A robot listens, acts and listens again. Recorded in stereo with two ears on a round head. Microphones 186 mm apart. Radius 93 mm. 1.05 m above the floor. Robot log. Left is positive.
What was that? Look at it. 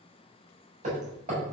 note: The hammering: about 35° right or 145° right.
cmd yaw -35
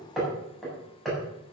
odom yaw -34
end: Found it: hammering, straight ahead, over 4 m away.